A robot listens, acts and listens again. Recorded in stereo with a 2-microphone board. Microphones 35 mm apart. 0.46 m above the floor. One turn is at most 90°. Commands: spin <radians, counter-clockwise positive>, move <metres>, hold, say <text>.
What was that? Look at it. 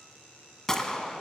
spin 0.52
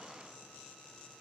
hold
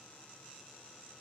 say I heard a gunshot, but can't make it out now. It was about 20° right or 140° left.